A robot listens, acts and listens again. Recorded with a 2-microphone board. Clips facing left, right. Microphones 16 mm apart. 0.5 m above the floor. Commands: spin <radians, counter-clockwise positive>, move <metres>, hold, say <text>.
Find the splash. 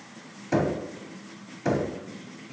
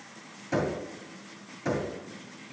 hold
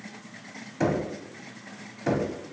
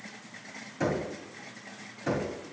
hold
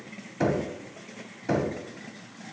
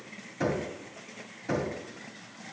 say I can't make out a splash to turn to.